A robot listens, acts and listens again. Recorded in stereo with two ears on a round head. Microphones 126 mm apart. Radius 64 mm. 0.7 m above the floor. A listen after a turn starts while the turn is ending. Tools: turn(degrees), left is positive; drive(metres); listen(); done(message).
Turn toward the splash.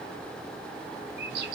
listen()
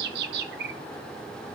listen()
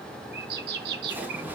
turn(degrees=-30)
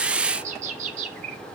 listen()
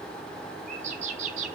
done("I heard a splash, but can't make it out now. It was about 15° left or 135° right.")